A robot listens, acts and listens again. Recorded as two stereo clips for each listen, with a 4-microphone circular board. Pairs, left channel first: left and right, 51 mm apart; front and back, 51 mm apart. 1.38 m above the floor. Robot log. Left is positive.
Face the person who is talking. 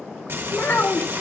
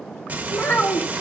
note: The child speaking: 50° left.
cmd yaw +50
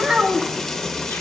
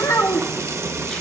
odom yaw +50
note: The child speaking is now 15° right.
cmd yaw -15
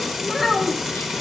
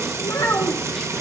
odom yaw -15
end: Found it: a child speaking, straight ahead.